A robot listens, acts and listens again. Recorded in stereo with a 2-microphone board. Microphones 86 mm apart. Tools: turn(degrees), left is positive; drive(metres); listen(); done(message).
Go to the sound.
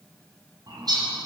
turn(degrees=-50)
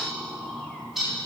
drive(metres=1.0)
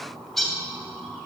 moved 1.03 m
drive(metres=1.0)
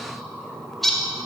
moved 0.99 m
drive(metres=1.0)
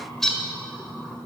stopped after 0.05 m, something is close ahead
done("Arrived at the bird, straight ahead.")